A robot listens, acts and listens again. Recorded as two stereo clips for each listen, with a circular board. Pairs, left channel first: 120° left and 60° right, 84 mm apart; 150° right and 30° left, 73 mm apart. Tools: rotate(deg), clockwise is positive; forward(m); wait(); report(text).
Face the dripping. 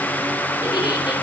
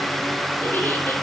wait()
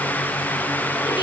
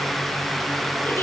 wait()
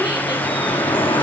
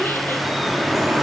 rotate(-115)
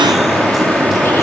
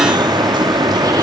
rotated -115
rotate(-30)
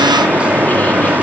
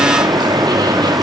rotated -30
rotate(-15)
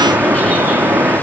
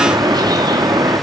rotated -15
rotate(-10)
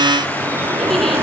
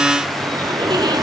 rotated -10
report("Facing the dripping, 2 to 4 m away.")